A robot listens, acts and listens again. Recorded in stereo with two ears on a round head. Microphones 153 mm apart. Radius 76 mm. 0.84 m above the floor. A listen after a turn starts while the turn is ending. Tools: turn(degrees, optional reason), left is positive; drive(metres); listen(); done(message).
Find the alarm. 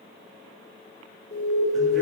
turn(degrees=45, reason="The alarm: about 45° left or 135° left.")
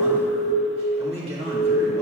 done("Found it: an alarm, straight ahead.")